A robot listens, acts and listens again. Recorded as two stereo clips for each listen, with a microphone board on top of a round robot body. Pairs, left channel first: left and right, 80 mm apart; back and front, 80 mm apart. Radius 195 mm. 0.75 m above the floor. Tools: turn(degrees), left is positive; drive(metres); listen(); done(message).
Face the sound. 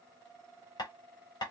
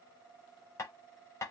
turn(degrees=125)
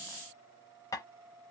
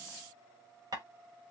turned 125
turn(degrees=40)
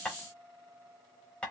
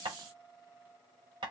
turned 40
turn(degrees=10)
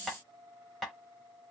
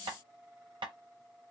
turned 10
done("Found it: tapping, straight ahead, under 1 m away.")